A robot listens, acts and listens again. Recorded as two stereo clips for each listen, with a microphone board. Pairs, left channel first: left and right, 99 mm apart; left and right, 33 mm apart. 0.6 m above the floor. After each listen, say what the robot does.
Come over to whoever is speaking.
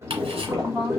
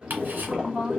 Turn 30° left.
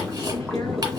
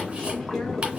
Keep listening.
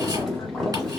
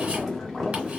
Keep listening.
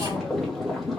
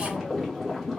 I heard a woman speaking, but can't make it out now. It was about 25° right or 145° left. I did not reach it.